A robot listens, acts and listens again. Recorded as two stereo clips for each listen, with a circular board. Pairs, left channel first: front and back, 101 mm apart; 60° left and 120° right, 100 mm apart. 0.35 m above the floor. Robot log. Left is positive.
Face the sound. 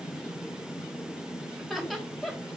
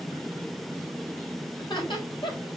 note: The laughter: 90° left.
cmd yaw +90
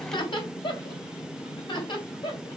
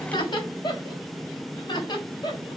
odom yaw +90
note: The laughter is now 25° left.
cmd yaw +25
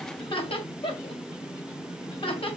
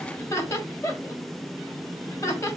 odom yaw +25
end: Facing the laughter, 2 to 4 m away.